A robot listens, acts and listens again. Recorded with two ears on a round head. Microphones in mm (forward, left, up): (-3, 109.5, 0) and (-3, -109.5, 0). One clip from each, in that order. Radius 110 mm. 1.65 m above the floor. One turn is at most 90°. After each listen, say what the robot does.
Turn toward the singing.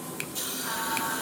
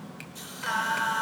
Turn 70° right.
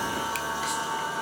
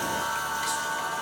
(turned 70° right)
Facing the singing, over 4 m away.